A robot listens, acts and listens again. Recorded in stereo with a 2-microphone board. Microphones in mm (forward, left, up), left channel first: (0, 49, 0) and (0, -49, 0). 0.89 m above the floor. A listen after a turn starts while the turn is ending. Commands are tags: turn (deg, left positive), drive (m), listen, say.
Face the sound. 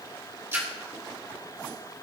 <turn deg="-30"/>
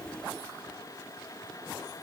<listen/>
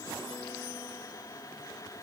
<say>I heard a splash, but can't make it out now. It was about straight ahead or 120° right.</say>